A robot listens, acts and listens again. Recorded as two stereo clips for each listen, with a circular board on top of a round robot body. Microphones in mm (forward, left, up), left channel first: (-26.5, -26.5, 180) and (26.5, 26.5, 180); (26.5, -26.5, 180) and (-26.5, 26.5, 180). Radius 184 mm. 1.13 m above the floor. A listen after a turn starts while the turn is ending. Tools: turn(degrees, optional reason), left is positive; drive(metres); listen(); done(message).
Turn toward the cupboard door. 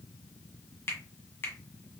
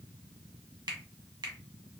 listen()
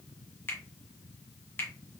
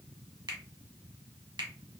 listen()
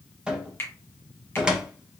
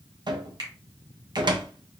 turn(degrees=125, reason="The cupboard door: 125° left.")
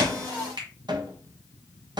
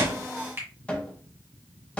turn(degrees=30, reason="The cupboard door is now 30° left.")
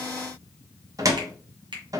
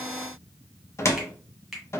turn(degrees=10, reason="The cupboard door is now 10° left.")
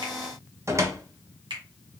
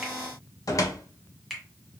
done("Facing the cupboard door.")